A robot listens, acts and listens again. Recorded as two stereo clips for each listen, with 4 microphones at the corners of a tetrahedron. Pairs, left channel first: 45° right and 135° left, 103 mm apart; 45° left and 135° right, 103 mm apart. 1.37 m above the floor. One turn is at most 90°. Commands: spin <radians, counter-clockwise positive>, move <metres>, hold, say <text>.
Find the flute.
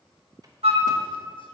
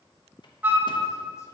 spin 1.57
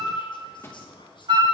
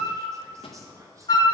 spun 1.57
spin 1.57
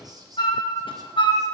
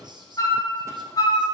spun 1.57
say Facing the flute, 1 to 2 m away.